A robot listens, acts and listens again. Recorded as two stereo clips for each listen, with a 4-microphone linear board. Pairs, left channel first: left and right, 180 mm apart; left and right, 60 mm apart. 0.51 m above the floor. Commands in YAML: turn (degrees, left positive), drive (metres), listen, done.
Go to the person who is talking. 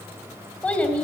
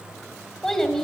turn: 30
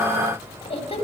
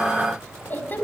turn: 140
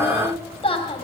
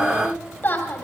turn: 35
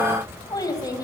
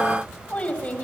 turn: 25
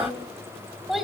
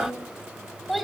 drive: 1.0
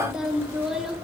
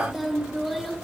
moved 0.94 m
drive: 1.0
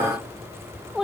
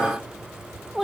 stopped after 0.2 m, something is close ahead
done: "I am next to the child speaking."